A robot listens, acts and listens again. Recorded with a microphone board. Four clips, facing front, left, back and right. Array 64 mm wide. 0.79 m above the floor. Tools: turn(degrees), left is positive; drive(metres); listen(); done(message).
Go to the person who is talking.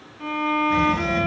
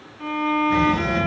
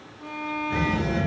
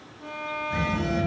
turn(degrees=120)
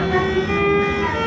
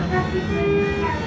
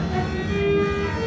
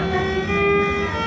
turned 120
turn(degrees=20)
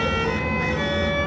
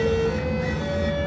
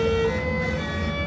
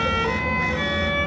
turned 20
drive(metres=1.0)
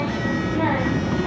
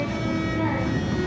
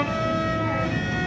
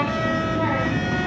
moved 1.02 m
turn(degrees=-15)
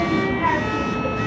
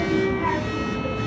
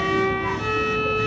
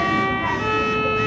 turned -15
drive(metres=1.0)
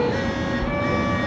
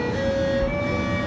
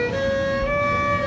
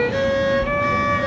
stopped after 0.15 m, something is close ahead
done("I am next to the child speaking.")